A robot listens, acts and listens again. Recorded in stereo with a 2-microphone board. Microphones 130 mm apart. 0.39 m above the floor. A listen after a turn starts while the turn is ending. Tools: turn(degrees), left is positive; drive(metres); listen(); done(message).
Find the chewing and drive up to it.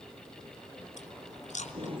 turn(degrees=65)
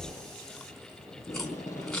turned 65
drive(metres=1.0)
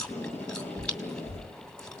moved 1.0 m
drive(metres=1.0)
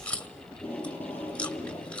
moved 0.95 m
turn(degrees=10)
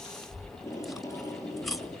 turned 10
drive(metres=1.0)
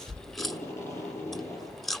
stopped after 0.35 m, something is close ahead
done("I am next to the chewing.")